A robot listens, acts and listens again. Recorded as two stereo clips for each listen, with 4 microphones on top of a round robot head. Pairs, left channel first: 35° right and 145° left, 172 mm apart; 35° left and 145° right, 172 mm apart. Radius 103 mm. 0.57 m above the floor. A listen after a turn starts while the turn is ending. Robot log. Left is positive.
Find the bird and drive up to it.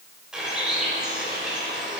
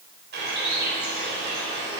note: The bird: 130° right.
cmd yaw -130
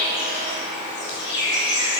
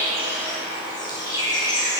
note: The bird is now 30° right.
cmd yaw -30
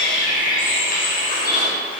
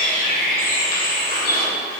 cmd fwd 1.0
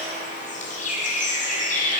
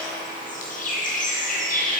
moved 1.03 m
cmd fwd 1.0
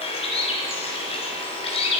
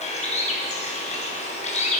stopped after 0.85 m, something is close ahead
end: Arrived at the bird, straight ahead.